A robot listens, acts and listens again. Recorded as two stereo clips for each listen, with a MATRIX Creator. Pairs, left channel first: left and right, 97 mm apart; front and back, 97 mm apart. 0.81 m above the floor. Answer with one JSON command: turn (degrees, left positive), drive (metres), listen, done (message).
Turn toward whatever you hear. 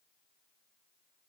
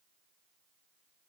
{"listen": true}
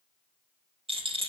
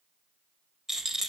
{"turn": -95}
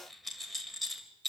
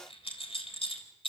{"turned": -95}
{"done": "Found it: a rattle, straight ahead, 2 to 4 m away."}